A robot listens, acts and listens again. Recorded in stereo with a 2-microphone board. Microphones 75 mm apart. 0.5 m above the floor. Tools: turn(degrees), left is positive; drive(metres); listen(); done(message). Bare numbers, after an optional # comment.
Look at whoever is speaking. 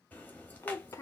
# The child speaking: about 40° left or 140° left.
turn(40)
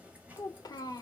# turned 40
# So it is at 85° left.
turn(85)
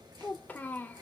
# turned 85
# The child speaking is now 25° left.
turn(25)
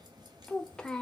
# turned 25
# The child speaking is now 10° left.
turn(10)
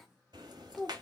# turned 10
done("Facing the child speaking, 1 to 2 m away.")